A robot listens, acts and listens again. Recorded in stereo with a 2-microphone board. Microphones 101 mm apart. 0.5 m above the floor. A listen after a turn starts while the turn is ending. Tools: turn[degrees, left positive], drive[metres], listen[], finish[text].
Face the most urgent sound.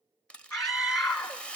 Thought: The scream: about 35° left or 145° left.
Action: turn[35]
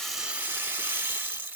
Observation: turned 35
Action: listen[]
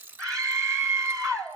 Action: finish[Found it: a scream, straight ahead, 1 to 2 m away.]